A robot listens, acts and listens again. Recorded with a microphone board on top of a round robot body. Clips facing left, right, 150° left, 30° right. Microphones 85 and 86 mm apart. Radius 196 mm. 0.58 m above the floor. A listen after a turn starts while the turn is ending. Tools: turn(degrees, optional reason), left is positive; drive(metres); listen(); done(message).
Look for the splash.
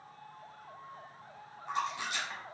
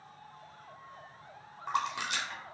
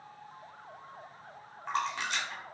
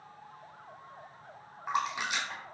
turn(degrees=-110, reason="The splash: 110° right.")
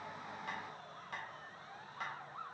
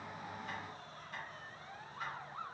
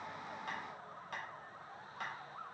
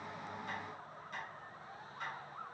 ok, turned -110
done("Facing where the splash came from. I can't hear it now.")